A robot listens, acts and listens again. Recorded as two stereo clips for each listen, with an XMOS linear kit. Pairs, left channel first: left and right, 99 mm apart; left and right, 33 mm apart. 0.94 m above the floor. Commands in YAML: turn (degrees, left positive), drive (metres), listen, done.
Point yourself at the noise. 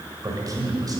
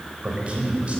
turn: -40
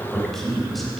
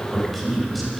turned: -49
done: "Found it: a man speaking, straight ahead, over 4 m away."